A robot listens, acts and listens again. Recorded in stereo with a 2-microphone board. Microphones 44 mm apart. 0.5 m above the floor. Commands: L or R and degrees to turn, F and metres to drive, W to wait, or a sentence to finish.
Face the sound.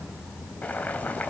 L35
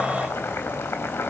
L110
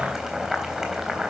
R10
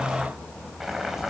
Facing the boiling.